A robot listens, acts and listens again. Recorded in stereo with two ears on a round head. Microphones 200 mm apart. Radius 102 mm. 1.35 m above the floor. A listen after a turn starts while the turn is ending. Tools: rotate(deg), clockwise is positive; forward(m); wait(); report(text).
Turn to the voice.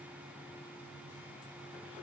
wait()
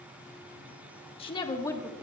rotate(-30)
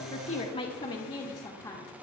rotate(-30)
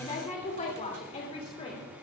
rotate(-150)
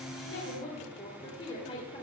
rotate(-25)
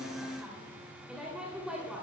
report("Facing the woman speaking.")